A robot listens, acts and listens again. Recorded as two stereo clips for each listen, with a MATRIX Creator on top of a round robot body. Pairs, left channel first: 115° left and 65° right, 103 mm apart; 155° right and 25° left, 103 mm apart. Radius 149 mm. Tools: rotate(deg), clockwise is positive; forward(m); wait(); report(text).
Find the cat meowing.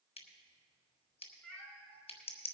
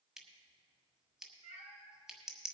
rotate(-40)
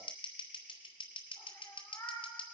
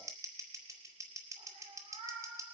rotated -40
rotate(-50)
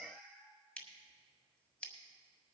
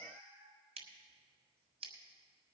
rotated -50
rotate(-25)
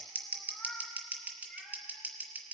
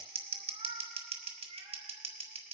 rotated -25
rotate(-20)
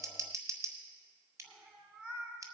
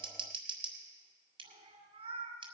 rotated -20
report("Found it: a cat meowing, straight ahead, 1 to 2 m away.")